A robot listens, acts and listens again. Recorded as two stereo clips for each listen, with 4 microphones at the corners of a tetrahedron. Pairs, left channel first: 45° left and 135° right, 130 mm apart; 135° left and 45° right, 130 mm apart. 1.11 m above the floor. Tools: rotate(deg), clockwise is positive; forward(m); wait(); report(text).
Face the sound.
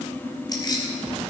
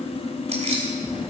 rotate(10)
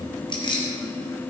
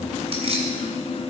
report("Facing the keys jangling.")